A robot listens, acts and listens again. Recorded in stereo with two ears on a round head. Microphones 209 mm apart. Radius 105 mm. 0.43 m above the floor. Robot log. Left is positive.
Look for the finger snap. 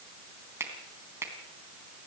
cmd yaw -30
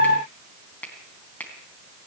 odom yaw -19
end: Facing the finger snap, 2 to 4 m away.